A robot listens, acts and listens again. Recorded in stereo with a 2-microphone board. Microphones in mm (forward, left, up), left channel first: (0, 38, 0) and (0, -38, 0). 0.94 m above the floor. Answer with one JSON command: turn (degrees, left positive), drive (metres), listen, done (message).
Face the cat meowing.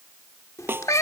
{"turn": 45}
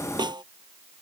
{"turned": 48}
{"listen": true}
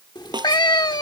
{"turn": 85}
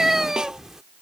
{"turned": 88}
{"done": "Facing the cat meowing."}